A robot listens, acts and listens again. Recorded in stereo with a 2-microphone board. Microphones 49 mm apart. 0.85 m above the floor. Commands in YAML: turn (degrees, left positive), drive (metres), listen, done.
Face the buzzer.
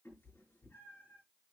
listen: true
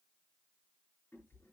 listen: true
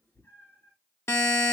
turn: 90
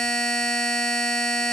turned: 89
turn: 15
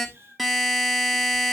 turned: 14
done: "Found it: a buzzer, straight ahead."